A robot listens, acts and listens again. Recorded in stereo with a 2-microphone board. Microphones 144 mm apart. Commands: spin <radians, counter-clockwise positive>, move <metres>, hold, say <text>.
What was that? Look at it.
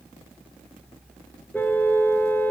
spin 0.52
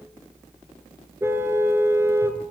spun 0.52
spin -0.26
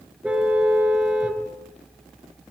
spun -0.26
say Found it: a car horn, straight ahead.